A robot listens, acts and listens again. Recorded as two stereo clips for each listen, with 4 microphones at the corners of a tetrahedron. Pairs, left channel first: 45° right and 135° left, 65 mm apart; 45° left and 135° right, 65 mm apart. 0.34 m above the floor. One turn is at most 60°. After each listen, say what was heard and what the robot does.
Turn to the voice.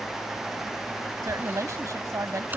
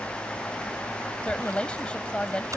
The woman speaking: 115° left. Turn 60° left.
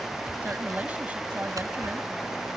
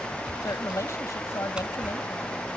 The woman speaking is now 75° left. Turn 60° left.
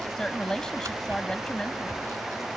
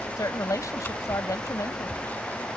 The woman speaking is now 30° left. Turn 30° left.
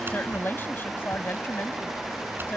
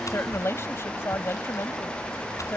Found it: a woman speaking, straight ahead.